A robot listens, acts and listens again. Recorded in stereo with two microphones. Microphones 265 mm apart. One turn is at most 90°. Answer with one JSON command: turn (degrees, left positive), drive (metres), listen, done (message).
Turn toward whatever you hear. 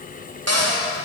{"turn": -65}
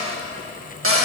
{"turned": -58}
{"turn": -55}
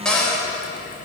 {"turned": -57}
{"done": "Found it: a cupboard door, straight ahead, 1 to 2 m away."}